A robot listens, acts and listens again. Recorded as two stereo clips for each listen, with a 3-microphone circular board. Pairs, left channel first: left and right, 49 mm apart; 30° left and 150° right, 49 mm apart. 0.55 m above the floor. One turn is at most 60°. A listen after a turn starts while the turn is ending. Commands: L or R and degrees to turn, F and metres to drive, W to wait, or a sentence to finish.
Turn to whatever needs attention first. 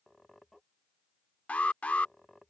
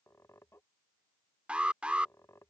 L60
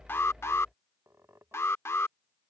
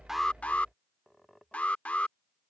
L60
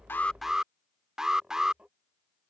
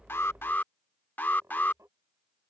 R10
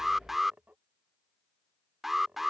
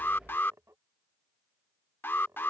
Facing the alarm.